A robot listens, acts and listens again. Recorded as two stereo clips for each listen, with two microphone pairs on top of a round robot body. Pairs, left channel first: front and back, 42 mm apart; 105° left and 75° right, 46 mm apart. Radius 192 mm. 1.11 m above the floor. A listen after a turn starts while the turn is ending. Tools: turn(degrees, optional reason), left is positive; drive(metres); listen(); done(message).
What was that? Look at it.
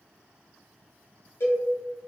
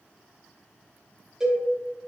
done("Found it: a cowbell, straight ahead.")